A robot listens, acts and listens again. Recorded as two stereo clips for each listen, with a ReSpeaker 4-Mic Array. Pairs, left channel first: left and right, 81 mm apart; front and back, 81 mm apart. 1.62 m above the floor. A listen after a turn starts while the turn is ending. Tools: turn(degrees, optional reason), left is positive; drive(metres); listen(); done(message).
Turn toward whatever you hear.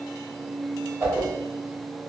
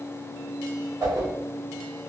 turn(degrees=-145, reason="The whoosh: 145° right.")
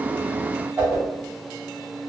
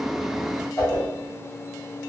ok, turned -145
turn(degrees=-40, reason="The whoosh is now 40° right.")
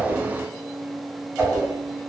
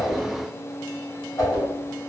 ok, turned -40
turn(degrees=-20, reason="The whoosh is now 20° right.")
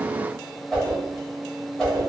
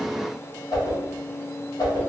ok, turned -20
done("Facing the whoosh, 1 to 2 m away.")